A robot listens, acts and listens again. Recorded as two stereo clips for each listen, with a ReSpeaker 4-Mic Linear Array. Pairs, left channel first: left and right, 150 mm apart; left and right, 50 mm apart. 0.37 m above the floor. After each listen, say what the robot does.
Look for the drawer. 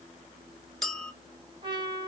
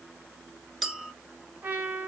Keep listening.
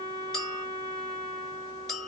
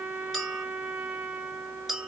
Keep listening.
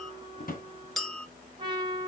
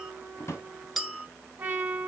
Turn 65° left.
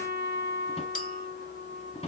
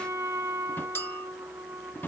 Turn 45° left.
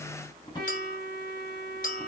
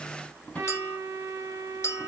Turn 30° left.
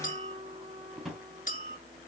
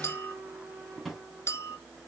Found it: a drawer, straight ahead, 1 to 2 m away.